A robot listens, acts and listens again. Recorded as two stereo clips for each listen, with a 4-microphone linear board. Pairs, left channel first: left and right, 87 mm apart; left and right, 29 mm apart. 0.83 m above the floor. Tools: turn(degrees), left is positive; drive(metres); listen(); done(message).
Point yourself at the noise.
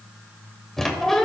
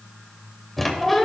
turn(degrees=30)
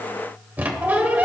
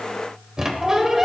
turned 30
turn(degrees=-25)
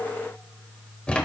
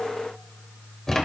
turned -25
turn(degrees=15)
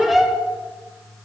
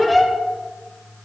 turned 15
done("Found it: a squeak, straight ahead, 1 to 2 m away.")